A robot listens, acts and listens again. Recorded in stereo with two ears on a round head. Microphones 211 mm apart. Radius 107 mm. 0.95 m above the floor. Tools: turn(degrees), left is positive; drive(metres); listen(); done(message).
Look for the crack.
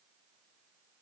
listen()
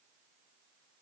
listen()
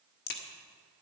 turn(degrees=40)
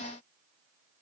listen()
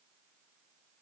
done("I heard a crack, but can't make it out now. It was about straight ahead or 100° left.")